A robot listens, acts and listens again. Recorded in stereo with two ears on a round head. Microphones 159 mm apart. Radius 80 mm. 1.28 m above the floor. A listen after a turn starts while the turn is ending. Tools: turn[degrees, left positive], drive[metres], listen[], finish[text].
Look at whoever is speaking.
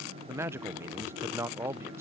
Action: turn[-30]
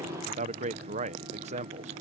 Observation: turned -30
Thought: So it is at 135° right.
Action: turn[-135]
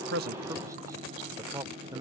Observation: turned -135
Thought: The man speaking is now 20° right.
Action: turn[-20]
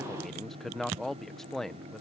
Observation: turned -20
Action: finish[Found it: a man speaking, straight ahead.]